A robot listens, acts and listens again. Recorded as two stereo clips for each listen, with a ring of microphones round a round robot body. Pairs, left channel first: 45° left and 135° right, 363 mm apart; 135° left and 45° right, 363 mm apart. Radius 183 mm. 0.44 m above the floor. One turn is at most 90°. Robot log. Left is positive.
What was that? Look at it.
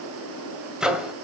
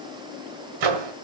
note: The microwave: 45° right.
cmd yaw -45
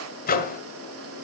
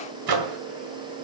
note: The microwave is now 20° right.
cmd yaw -20
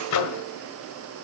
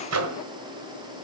end: Found it: a microwave, straight ahead.